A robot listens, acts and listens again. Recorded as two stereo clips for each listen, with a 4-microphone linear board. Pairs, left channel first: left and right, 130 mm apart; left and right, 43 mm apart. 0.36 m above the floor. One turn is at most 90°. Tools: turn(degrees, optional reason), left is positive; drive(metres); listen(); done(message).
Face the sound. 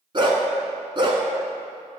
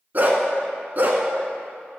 turn(degrees=-40, reason="The dog barking: about 40° right or 140° right.")
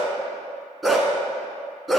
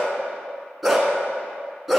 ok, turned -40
done("Found it: a dog barking, straight ahead.")